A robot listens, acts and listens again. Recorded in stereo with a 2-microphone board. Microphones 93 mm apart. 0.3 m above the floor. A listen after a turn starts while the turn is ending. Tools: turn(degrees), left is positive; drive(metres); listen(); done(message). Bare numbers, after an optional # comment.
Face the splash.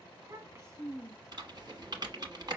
listen()
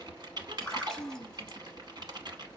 turn(30)
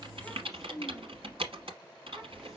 listen()
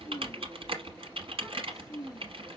done("I heard a splash, but can't make it out now. It was about 25° right or 145° left.")